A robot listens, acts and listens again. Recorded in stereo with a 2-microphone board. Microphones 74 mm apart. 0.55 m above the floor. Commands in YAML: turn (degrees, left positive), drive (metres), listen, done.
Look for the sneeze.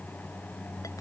listen: true
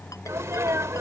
turn: -45
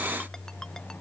listen: true
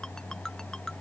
done: "I heard a sneeze, but can't make it out now. It was about straight ahead or 90° right."